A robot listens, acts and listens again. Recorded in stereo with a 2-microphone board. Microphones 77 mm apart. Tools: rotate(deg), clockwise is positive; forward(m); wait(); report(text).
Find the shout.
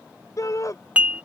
rotate(-45)
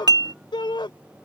rotate(-90)
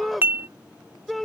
report("Found it: a shout, straight ahead.")